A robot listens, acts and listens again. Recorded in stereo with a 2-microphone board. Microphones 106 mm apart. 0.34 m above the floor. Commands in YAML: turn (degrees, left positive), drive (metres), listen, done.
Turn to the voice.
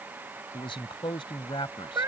turn: 50
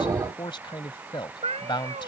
turn: 60
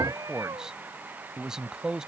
done: "Found it: a man speaking, straight ahead."